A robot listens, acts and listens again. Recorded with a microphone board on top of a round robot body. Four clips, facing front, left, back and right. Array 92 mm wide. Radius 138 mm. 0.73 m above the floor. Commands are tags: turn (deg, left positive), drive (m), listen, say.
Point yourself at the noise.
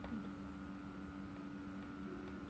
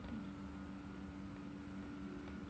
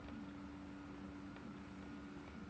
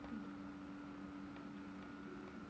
<listen/>
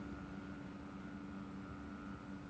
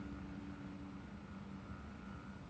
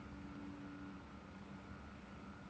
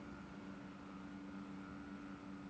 <listen/>
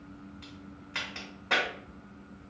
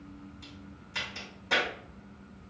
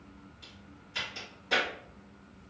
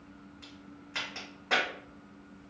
<turn deg="-35"/>
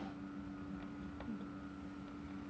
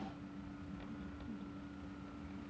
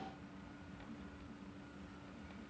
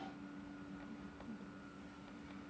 <say>Facing where the crack came from. I can't hear it now.</say>